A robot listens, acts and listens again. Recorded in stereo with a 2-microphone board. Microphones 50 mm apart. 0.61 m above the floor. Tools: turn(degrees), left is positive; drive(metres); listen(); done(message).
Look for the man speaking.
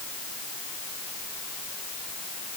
listen()
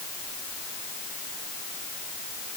listen()
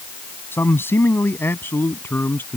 turn(degrees=50)
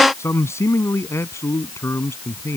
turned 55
turn(degrees=75)
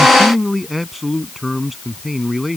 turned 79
done("Facing the man speaking.")